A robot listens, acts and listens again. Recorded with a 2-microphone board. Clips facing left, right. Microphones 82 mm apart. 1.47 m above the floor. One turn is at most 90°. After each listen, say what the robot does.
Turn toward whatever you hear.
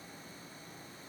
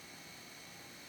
Keep listening.
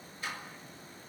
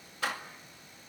Turn 90° right.
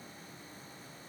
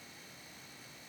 I heard a door slam from this way, but can't make it out now.